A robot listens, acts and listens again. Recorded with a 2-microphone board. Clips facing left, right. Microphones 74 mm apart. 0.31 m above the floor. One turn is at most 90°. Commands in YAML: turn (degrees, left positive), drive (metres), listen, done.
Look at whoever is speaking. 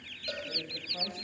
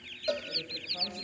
turn: 25
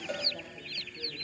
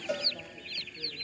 listen: true
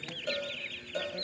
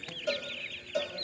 listen: true
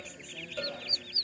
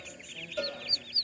done: "I heard a woman speaking, but can't make it out now. It was about straight ahead or 130° left."